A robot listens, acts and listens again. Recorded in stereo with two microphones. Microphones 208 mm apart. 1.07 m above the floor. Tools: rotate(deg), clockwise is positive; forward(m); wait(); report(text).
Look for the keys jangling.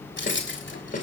rotate(-65)
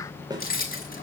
rotate(-45)
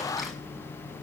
wait()
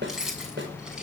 report("Facing the keys jangling.")